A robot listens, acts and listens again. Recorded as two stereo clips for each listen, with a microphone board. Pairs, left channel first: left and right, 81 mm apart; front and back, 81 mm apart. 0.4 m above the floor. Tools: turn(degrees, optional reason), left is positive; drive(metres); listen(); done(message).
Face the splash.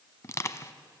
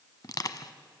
listen()
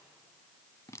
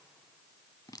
listen()
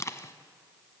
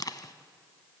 done("I can't make out a splash to turn to.")